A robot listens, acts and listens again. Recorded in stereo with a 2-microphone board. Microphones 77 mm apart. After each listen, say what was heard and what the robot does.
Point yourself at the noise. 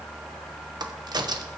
The crack: about 70° right or 110° right. Turn 70° right.
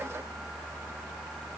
Keep listening.
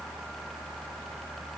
I heard a crack, but can't make it out now. It was about straight ahead or 40° right.